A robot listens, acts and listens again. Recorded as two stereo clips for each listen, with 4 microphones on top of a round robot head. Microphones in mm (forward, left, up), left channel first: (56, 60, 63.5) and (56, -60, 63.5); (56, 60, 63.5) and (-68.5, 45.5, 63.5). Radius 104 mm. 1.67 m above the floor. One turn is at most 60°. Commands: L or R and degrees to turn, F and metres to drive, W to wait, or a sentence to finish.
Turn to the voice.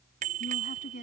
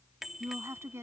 L60
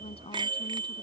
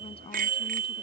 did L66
L50
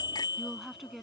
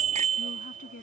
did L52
Facing the woman speaking.